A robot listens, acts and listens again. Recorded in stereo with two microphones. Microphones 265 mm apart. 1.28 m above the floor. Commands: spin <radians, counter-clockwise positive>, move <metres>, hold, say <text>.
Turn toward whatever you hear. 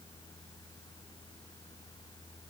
hold
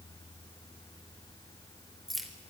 spin 0.52
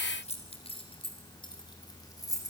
spin 0.52
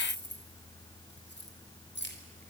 spin 2.44
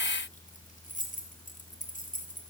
spin 0.52
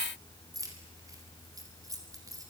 spin -0.17
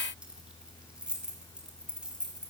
say Facing the keys jangling.